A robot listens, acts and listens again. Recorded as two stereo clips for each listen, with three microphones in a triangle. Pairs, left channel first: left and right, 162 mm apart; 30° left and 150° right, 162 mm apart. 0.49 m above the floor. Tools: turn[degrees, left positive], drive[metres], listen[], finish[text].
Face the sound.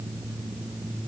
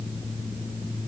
Action: listen[]
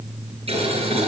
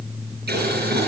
Thought: The boiling: 145° right.
Action: turn[-145]
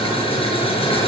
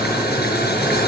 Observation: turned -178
Thought: The boiling is now 35° left.
Action: turn[35]
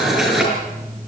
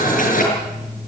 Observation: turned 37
Action: finish[Facing the boiling.]